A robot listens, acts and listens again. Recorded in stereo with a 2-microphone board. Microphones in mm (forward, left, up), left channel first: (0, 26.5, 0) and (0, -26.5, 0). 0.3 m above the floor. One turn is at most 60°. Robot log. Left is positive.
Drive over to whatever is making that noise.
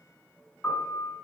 note: The piano: about 35° left or 145° left.
cmd yaw +35
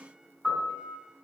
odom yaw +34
cmd fwd 1.0
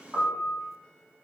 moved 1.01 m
cmd fwd 1.0
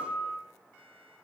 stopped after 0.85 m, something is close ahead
note: The piano is now 10° right.
cmd yaw -10
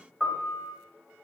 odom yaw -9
end: I am next to the piano.